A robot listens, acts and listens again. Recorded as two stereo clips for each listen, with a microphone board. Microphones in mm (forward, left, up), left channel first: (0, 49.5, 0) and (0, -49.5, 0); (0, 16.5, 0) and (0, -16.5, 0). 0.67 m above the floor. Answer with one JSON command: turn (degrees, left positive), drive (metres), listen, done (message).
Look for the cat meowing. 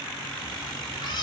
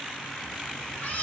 {"turn": 55}
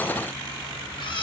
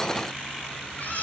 {"turn": 55}
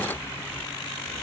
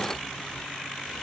{"listen": true}
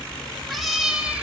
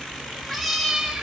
{"turn": -15}
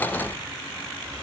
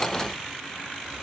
{"listen": true}
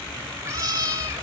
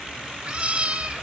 {"turn": -35}
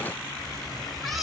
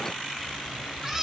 {"done": "Facing the cat meowing, 1 to 2 m away."}